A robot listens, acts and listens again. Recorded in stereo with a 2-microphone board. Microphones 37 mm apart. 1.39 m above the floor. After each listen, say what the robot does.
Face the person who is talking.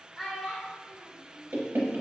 Turn 30° left.
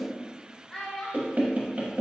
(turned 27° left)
Turn 155° left.
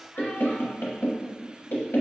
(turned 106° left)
Turn 50° left.
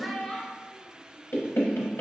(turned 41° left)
Found it: a child speaking, straight ahead, under 1 m away.